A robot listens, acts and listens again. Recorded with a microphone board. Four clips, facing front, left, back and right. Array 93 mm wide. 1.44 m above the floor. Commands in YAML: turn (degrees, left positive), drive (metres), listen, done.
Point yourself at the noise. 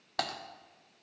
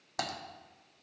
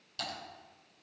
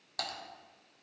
turn: 20
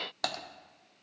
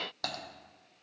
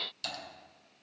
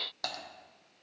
done: "Found it: typing on a keyboard, straight ahead, under 1 m away."